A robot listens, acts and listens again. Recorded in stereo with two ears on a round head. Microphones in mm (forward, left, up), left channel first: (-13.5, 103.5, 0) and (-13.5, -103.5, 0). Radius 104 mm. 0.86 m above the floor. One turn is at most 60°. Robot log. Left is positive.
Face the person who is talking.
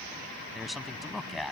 cmd yaw +30
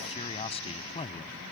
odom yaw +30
note: So it is at 150° left.
cmd yaw +60
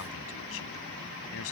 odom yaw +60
note: Nothing new. It was at 90° left.
cmd yaw +60
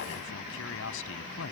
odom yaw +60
note: The man speaking is now 60° left.
cmd yaw +60
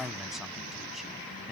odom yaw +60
end: Facing the man speaking.